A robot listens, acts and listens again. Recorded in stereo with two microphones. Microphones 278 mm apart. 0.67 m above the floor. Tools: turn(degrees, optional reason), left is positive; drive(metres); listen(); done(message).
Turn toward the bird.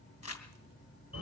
listen()
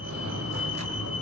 listen()
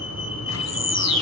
turn(degrees=65, reason="The bird: about 65° left or 115° left.")
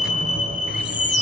listen()
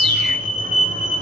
listen()
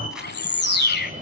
turn(degrees=40, reason="So it is at 40° left.")
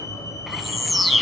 done("Found it: a bird, straight ahead, 1 to 2 m away.")